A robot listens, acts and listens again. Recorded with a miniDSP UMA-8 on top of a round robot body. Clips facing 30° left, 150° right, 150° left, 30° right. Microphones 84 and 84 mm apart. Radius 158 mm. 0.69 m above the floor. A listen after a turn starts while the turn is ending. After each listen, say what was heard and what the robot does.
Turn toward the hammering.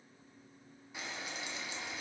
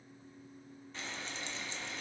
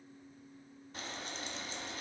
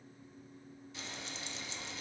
Keep listening.
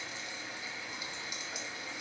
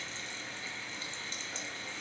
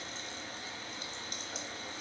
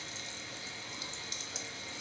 Keep listening.
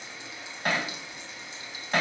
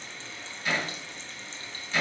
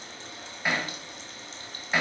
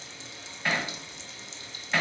The hammering: 70° left. Turn 70° left.
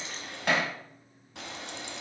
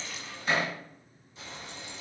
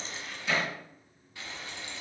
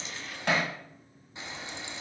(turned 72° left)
Found it: hammering, straight ahead.